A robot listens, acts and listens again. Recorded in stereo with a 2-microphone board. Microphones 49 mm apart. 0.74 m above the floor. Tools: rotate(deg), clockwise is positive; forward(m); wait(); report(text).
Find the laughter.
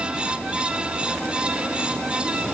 wait()
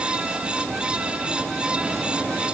wait()
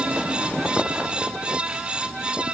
report("I can't make out laughter to turn to.")